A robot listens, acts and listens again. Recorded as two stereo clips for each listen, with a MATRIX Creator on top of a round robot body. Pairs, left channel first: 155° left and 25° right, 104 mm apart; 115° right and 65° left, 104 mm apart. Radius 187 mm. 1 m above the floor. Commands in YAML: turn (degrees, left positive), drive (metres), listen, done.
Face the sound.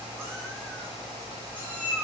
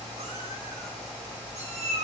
turn: 55
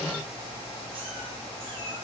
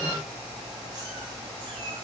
listen: true
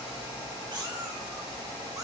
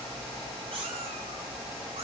turn: 30
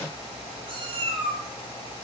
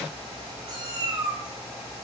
turn: 15
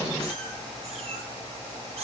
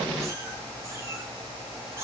done: "Found it: a cat meowing, straight ahead."